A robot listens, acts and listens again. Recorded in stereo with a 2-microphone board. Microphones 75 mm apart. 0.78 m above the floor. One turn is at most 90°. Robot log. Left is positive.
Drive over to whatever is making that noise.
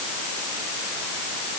cmd idle
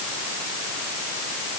cmd idle
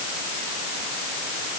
end: I can't make out anything to turn to.